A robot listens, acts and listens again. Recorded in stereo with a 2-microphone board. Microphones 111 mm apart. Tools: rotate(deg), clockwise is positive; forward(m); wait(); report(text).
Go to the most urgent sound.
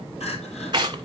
rotate(-70)
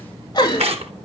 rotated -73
rotate(-35)
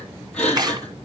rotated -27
rotate(-10)
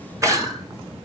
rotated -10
forward(1.0)
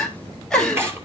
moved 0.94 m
forward(1.0)
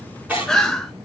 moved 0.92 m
forward(1.0)
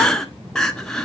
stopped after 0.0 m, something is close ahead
report("I am next to the crying.")